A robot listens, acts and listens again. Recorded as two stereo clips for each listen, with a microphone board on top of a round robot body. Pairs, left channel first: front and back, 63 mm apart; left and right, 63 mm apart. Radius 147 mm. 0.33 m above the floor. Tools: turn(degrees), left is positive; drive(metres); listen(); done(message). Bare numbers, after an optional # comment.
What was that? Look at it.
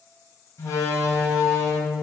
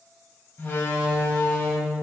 # The door slam: 40° left.
turn(40)
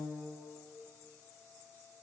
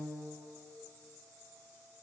done("Facing where the door slam came from. I can't hear it now.")